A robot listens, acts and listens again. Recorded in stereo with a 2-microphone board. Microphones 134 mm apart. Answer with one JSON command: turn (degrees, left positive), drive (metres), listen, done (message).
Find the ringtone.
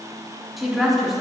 {"listen": true}
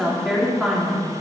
{"listen": true}
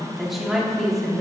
{"done": "I can't make out a ringtone to turn to."}